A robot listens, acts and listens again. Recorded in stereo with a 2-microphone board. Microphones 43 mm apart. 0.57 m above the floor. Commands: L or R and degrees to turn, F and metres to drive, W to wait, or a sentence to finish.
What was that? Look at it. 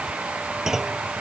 R30
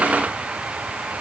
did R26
W
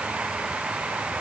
I heard a clunk, but can't make it out now. It was about 15° left or 145° right.